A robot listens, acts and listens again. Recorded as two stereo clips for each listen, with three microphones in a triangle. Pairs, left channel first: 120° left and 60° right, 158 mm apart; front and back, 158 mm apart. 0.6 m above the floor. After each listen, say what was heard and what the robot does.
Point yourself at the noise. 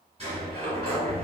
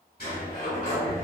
The sliding door: 10° right. Turn 10° right.
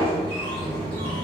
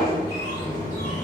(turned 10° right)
Facing the sliding door.